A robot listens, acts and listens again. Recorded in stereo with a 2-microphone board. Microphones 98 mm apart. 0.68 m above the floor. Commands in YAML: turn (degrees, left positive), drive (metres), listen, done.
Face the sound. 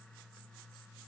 listen: true
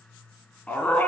turn: 15
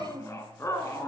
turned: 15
turn: 150
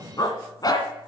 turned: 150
turn: 45
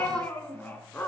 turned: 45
turn: 20
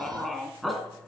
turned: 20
done: "Found it: a dog barking, straight ahead, 2 to 4 m away."